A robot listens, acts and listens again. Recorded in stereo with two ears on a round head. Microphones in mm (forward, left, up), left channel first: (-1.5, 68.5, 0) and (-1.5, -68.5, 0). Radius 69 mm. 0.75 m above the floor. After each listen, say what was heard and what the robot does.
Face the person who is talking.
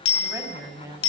The woman speaking: about 20° right or 160° right. Turn 20° right.
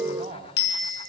So it is at 140° right. Turn 140° right.
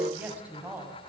The woman speaking is now 10° right. Turn 10° right.
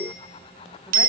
Keep listening.
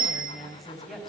Facing the woman speaking.